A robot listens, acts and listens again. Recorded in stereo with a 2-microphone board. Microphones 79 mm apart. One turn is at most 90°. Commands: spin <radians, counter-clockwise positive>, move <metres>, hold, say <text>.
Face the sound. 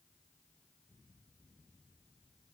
hold
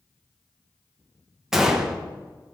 spin -0.52
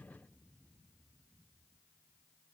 hold
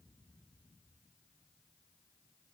say I heard a gunshot, but can't make it out now. It was about 25° left or 145° right.